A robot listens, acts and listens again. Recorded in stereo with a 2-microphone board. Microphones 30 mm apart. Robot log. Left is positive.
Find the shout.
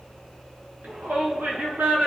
note: The shout: about 75° right or 105° right.
cmd yaw -75
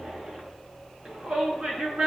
note: So it is at 30° right.
cmd yaw -30
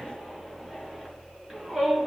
note: The shout is now 15° right.
cmd yaw -15
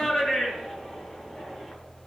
end: Found it: a shout, straight ahead, over 4 m away.